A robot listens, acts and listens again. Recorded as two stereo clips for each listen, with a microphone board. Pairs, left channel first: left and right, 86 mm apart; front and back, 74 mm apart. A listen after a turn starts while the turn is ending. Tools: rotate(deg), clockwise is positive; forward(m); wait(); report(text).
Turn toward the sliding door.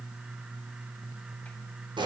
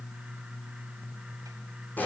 wait()
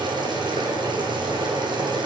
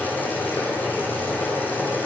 wait()
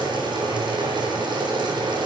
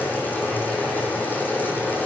report("I can't make out a sliding door to turn to.")